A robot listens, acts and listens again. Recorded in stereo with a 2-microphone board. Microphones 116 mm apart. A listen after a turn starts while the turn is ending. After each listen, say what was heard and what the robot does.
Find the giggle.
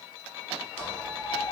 Keep listening.
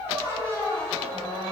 Keep listening.
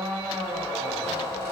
I can't make out a giggle, only a squeak.